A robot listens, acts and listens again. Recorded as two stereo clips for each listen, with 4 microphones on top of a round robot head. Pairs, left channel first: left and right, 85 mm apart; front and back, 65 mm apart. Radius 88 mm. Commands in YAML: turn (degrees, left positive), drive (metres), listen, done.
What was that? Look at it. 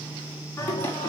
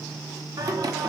turn: 160
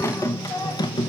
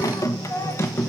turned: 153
turn: 55
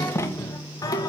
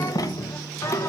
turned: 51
turn: 45
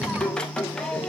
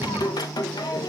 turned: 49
turn: 10
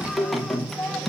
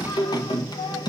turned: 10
done: "Facing the singing, 1 to 2 m away."